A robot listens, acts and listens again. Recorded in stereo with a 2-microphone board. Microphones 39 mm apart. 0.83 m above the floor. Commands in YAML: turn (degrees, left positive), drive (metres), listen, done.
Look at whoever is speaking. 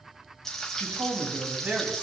turn: -45
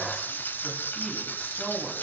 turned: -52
listen: true
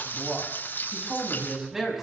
turn: -10
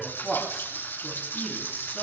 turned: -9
done: "Facing the man speaking."